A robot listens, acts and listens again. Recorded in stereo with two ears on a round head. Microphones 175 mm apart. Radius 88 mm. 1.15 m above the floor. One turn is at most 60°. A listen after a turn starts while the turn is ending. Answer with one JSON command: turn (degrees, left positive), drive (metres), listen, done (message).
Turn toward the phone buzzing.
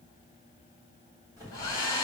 {"turn": -20}
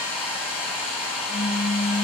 {"turn": -60}
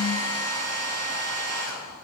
{"turn": -60}
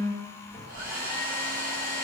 {"turn": -10}
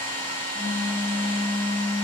{"done": "Found it: a phone buzzing, straight ahead, 2 to 4 m away."}